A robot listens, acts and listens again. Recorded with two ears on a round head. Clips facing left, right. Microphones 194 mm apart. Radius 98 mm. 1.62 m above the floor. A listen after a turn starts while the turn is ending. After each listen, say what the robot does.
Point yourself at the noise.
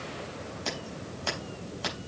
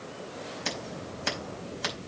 Turn 20° right.
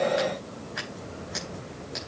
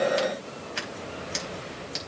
Turn 140° right.
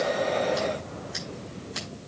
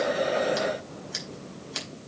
Turn 35° right.
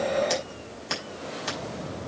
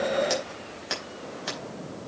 Found it: scissors, straight ahead.